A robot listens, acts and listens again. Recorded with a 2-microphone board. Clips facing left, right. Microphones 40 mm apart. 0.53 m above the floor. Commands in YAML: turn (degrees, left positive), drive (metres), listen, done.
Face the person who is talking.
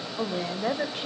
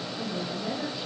turn: 55
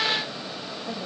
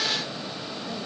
listen: true
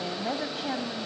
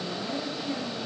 turn: 70
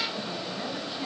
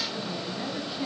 listen: true
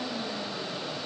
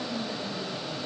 listen: true
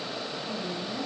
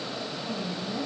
done: "Facing the woman speaking, over 4 m away."